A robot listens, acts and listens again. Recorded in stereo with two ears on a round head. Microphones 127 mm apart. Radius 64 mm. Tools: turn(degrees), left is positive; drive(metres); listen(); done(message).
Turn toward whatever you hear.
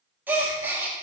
turn(degrees=-30)
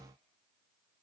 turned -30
listen()
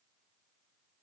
done("I heard a gasp, but can't make it out now. It was about 15° left or 135° right.")